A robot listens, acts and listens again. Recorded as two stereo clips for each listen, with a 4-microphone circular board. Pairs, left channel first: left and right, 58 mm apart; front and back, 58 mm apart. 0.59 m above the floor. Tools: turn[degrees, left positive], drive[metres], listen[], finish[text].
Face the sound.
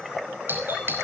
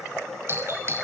Thought: The doorbell: 140° right.
Action: turn[-140]
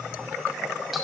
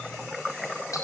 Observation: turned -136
Action: listen[]
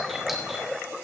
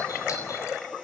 Action: listen[]
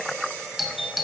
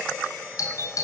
Action: finish[Found it: a doorbell, straight ahead.]